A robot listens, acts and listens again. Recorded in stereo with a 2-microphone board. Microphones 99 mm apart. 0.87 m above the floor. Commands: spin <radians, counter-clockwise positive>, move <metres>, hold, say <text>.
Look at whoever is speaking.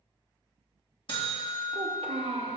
spin -1.22
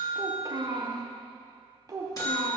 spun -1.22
spin -0.70
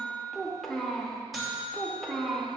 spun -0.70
say Found it: a child speaking, straight ahead.